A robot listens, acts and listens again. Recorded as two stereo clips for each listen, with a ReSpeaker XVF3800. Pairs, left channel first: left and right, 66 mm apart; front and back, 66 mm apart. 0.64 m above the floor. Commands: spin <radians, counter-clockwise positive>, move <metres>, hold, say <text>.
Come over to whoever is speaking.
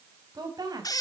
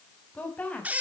spin -1.22
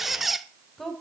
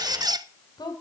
move 1.0
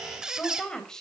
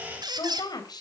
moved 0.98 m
spin 0.17
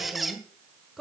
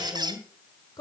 move 1.0
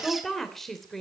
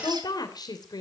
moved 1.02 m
move 1.0
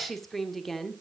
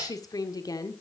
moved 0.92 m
move 1.0
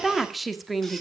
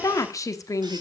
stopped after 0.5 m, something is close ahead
say I am next to the woman speaking.